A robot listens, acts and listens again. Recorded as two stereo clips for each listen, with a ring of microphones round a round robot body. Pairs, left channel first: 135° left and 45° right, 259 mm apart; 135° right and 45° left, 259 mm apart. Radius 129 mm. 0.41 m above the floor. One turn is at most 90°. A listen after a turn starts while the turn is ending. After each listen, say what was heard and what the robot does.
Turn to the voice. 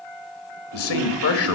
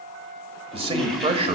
The man speaking: 110° left. Turn 90° left.
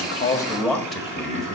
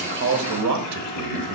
The man speaking is now 45° left. Turn 45° left.
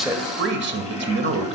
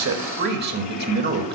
Found it: a man speaking, straight ahead.